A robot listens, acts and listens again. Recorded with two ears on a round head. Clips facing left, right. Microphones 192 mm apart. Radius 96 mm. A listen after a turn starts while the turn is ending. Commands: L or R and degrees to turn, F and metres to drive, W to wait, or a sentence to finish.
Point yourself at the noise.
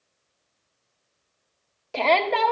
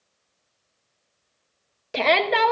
R20
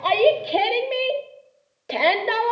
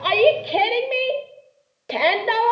Found it: a shout, straight ahead, under 1 m away.